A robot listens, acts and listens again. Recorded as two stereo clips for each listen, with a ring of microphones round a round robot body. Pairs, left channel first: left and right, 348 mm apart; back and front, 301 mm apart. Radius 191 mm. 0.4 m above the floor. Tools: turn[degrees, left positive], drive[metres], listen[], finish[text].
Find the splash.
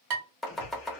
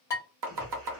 Thought: The splash: 35° left.
Action: turn[35]
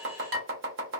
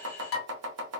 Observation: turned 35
Action: finish[I heard a splash from this way, but can't make it out now.]